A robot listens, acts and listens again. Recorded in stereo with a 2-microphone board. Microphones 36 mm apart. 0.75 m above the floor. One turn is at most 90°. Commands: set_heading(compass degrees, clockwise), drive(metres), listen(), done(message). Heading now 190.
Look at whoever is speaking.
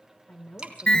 set_heading(130)
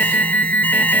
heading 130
listen()
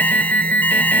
listen()
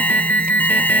done("I heard a woman speaking, but can't make it out now. It was about straight ahead or 60° left.")